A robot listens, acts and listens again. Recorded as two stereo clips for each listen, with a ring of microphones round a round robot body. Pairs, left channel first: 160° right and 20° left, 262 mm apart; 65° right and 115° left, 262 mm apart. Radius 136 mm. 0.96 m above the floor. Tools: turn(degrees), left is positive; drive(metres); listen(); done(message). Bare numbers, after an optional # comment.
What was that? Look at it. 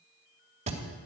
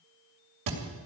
# The thud: 90° left.
turn(90)
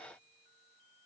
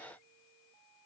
done("I heard a thud from this way, but can't make it out now.")